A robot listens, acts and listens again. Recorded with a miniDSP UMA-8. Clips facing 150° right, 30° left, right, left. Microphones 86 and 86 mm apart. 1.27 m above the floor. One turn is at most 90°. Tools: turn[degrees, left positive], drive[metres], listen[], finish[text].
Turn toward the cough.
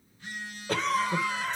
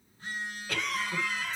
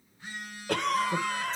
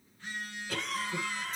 Thought: The cough: 100° right.
Action: turn[-90]
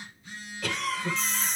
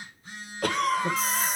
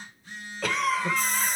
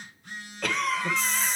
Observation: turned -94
Action: finish[Facing the cough.]